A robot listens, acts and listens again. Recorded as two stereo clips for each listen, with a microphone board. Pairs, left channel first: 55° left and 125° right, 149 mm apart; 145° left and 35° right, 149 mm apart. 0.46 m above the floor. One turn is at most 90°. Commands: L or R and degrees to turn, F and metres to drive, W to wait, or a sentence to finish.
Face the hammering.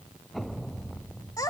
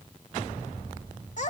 W
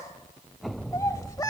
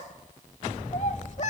W
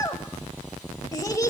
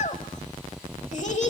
I can't make out hammering to turn to.